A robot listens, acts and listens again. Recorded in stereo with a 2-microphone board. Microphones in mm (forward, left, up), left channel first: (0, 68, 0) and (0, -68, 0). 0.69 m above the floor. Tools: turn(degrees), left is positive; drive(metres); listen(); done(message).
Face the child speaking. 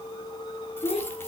turn(degrees=50)
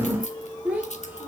turn(degrees=-10)
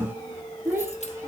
turn(degrees=-20)
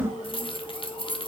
listen()
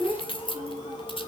turn(degrees=-15)
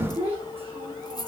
turn(degrees=-15)
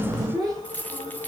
done("Facing the child speaking, 2 to 4 m away.")